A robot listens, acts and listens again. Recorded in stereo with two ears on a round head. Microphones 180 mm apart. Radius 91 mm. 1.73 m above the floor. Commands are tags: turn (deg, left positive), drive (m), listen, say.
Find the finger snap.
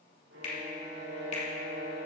<turn deg="35"/>
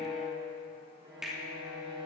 <say>Found it: a finger snap, straight ahead, 2 to 4 m away.</say>